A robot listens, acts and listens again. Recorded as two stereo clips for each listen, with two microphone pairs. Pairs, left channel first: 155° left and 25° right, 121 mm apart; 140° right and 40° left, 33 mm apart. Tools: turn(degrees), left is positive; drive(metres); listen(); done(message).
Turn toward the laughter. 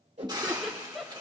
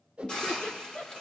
turn(degrees=-120)
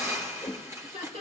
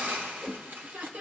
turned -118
done("Found it: laughter, straight ahead, 2 to 4 m away.")